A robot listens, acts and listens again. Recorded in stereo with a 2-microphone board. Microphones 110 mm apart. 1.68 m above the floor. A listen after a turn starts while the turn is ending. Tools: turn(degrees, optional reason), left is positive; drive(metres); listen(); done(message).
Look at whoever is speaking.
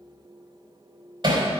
listen()
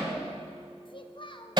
turn(degrees=50, reason="The child speaking: about 50° left or 130° left.")
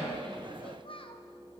turn(degrees=70, reason="So it is at 70° left.")
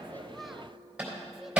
listen()
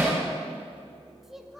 done("Facing the child speaking.")